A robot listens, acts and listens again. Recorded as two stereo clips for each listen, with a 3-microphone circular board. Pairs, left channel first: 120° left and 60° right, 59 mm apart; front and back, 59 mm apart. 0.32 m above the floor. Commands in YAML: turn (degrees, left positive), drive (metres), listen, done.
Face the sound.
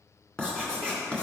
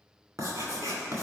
turn: -165
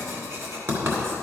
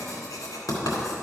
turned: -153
turn: -15
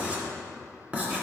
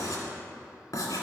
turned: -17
done: "Facing the writing, 2 to 4 m away."